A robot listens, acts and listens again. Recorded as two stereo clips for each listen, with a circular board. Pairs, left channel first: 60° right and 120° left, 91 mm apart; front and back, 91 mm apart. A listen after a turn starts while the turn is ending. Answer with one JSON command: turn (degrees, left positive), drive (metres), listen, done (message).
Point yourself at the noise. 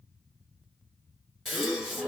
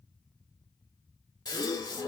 {"turn": 30}
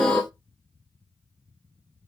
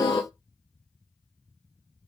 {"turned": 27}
{"done": "Found it: a gasp, straight ahead."}